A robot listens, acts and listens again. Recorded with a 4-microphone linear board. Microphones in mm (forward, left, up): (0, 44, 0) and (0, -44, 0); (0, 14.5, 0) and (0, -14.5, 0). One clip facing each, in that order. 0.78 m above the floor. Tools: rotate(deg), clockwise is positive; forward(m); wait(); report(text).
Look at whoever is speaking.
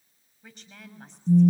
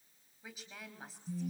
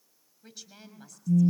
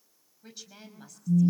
rotate(30)
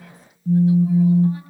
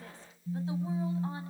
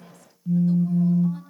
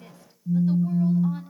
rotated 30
wait()
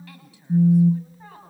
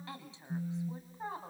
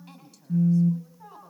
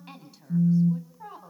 rotate(155)
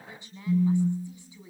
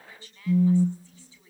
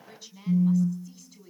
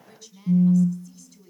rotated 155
rotate(-15)
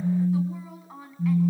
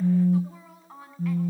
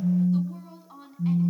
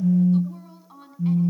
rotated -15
report("Facing the woman speaking.")